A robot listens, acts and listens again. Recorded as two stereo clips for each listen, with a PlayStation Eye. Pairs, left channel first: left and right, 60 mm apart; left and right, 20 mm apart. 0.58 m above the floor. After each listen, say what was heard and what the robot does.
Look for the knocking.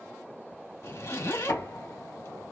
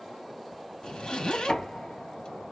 The knocking: about 60° left or 120° left. Turn 60° left.
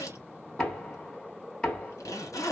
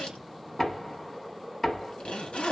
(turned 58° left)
So it is at 15° left. Turn 15° left.
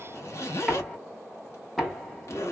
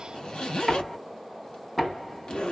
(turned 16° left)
Found it: knocking, straight ahead.